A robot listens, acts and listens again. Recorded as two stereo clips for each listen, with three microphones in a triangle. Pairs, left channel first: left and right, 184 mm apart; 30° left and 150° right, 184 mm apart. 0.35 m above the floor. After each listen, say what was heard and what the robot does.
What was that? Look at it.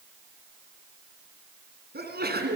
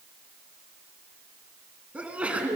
The sneeze: 65° right. Turn 65° right.
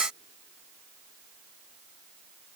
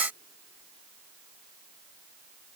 Facing where the sneeze came from. I can't hear it now.